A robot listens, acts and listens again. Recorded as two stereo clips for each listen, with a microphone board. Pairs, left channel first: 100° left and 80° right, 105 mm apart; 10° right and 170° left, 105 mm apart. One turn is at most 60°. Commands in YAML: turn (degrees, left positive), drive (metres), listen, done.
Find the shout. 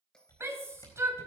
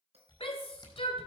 turn: -15
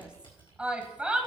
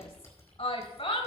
done: "Found it: a shout, straight ahead."